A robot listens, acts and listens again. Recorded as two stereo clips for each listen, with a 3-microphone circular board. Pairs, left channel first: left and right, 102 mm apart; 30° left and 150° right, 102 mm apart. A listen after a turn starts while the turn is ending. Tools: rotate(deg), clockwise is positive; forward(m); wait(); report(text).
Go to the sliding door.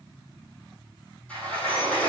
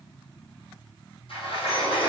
rotate(-15)
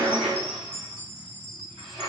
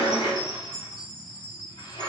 forward(1.0)
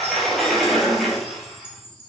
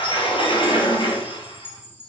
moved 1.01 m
forward(1.0)
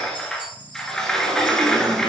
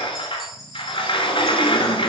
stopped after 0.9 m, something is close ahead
report("Arrived at the sliding door, straight ahead.")